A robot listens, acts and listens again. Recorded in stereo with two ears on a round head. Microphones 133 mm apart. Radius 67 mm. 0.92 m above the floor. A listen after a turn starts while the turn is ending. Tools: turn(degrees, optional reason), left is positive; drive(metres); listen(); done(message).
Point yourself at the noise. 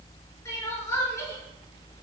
turn(degrees=20, reason="The crying: about 20° left or 160° left.")
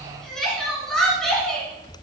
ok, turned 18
done("Facing the crying.")